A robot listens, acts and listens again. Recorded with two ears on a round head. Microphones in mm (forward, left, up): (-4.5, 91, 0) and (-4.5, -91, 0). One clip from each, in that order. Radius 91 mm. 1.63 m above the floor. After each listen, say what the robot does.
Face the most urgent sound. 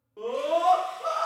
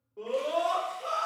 Turn 90° left.
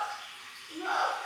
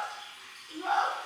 Found it: a scream, straight ahead.